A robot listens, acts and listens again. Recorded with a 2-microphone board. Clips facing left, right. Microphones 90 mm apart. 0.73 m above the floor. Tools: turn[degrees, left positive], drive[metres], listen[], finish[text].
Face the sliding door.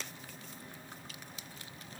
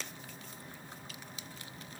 Action: listen[]
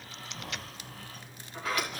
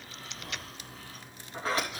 Thought: The sliding door: about 30° right or 150° right.
Action: turn[-30]
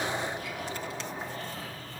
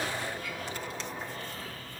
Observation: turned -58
Thought: So it is at 25° left.
Action: turn[25]
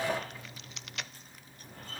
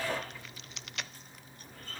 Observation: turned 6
Thought: The sliding door is now 20° left.
Action: turn[20]
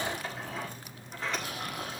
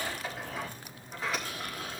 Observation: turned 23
Action: finish[Found it: a sliding door, straight ahead.]